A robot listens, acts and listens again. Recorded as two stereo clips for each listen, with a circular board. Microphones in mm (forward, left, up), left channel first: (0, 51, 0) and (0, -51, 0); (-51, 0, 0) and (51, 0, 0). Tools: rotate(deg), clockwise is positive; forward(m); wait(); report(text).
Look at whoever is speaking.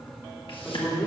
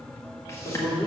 rotate(-170)
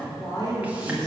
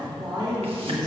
rotate(-45)
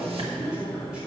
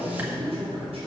report("Found it: a man speaking, straight ahead.")